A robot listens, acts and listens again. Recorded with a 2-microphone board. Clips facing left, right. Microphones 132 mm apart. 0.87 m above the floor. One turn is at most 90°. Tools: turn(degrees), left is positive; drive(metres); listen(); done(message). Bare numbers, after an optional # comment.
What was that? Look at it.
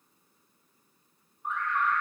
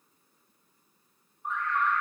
turn(-30)
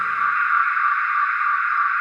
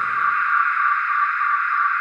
# So it is at 145° right.
turn(-90)
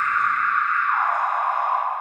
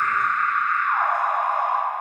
# The alarm is now 60° right.
turn(-60)
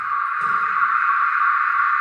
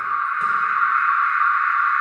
done("Found it: an alarm, straight ahead, 2 to 4 m away.")